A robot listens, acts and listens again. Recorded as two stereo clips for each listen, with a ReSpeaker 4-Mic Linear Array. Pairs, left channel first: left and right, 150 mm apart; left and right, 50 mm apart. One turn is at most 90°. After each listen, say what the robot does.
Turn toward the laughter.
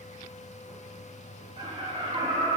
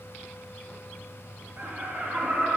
Turn 35° right.
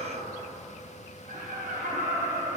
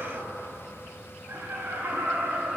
Turn 90° right.
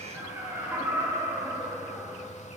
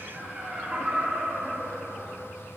Turn 15° right.
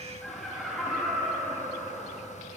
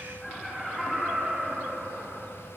Facing the laughter.